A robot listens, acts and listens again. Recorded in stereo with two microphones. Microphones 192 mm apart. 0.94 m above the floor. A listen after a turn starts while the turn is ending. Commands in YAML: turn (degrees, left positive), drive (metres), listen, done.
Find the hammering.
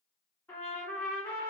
listen: true
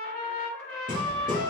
turn: -45
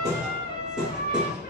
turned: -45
done: "Found it: hammering, straight ahead, 1 to 2 m away."